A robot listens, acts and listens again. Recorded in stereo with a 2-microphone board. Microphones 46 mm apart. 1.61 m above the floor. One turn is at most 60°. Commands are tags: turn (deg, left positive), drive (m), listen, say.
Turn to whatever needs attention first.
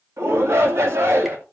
<turn deg="-60"/>
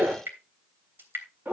<turn deg="-40"/>
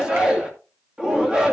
<turn deg="-15"/>
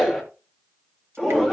<say>Found it: a shout, straight ahead, 2 to 4 m away.</say>